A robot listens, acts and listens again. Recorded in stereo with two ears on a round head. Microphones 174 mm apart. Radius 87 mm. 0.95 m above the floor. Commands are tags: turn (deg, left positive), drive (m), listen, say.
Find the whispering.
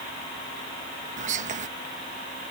<turn deg="-40"/>
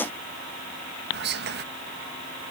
<turn deg="-90"/>
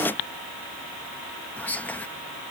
<turn deg="10"/>
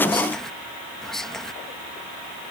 <say>Facing the whispering.</say>